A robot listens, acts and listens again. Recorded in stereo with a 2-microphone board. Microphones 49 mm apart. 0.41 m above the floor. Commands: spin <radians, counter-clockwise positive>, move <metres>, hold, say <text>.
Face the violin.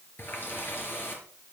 hold
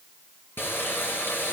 hold
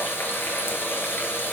say I can't make out a violin to turn to.